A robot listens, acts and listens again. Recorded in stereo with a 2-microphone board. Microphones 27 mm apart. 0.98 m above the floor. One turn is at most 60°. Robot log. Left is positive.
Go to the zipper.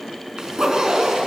note: The zipper: about 25° right or 155° right.
cmd yaw -25
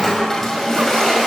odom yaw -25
cmd idle
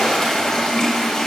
cmd idle
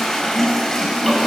end: I heard a zipper, but can't make it out now. It was about straight ahead or 130° right. I did not reach it.